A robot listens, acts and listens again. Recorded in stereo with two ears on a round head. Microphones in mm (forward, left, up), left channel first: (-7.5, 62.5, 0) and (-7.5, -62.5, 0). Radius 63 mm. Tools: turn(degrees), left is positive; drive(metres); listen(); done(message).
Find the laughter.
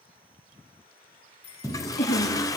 turn(degrees=90)
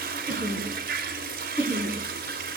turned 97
turn(degrees=-20)
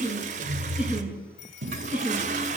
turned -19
turn(degrees=-10)
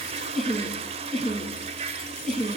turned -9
done("Found it: laughter, straight ahead.")